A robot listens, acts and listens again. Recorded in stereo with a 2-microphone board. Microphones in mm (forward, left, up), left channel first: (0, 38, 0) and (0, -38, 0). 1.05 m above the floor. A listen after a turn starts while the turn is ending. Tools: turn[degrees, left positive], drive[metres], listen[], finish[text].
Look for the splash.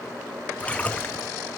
Thought: The splash: about 20° left or 160° left.
Action: turn[20]
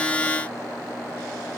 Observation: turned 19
Action: listen[]
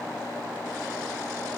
Action: finish[I heard a splash, but can't make it out now. It was about straight ahead or 145° left.]